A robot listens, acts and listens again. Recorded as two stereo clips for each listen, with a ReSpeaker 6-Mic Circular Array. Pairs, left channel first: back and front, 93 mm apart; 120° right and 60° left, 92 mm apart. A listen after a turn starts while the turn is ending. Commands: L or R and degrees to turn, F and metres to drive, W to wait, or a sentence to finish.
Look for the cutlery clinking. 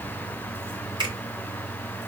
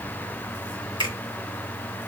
W
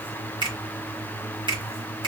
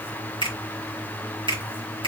W
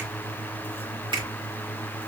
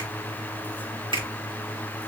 I can't make out cutlery clinking, only a finger snap.